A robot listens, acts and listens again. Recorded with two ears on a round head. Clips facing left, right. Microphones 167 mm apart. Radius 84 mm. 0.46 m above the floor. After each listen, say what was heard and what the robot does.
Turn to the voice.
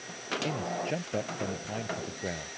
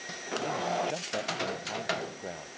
The man speaking: about 20° left or 160° left. Turn 20° left.
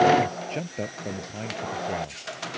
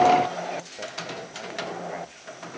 So it is at 135° left. Turn 135° left.
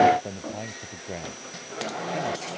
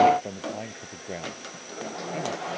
Found it: a man speaking, straight ahead.